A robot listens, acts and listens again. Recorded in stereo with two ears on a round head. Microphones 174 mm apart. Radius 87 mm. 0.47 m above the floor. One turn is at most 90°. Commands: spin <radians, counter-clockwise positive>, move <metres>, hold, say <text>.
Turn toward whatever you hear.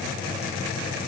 hold
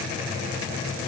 hold
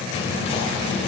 spin 0.52
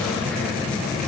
say Facing the whispering, 1 to 2 m away.